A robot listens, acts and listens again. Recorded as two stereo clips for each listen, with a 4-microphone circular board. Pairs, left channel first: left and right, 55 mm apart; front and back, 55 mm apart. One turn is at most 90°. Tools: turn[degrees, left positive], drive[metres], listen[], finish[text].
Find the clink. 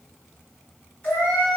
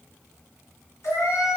Action: listen[]
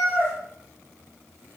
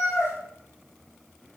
Action: listen[]
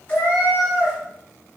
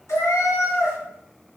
Action: finish[I can't make out a clink, only a cat meowing.]